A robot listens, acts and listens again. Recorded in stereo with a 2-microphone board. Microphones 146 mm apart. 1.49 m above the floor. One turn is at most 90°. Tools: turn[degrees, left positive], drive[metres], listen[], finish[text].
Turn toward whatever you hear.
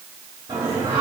Thought: The singing: about 20° right or 160° right.
Action: turn[-20]
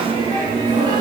Thought: The singing: about 30° right or 150° right.
Action: turn[-30]
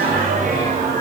Thought: So it is at 125° right.
Action: turn[-90]
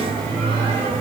Thought: The singing is now 40° right.
Action: turn[-40]
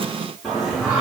Action: finish[Found it: singing, straight ahead, 2 to 4 m away.]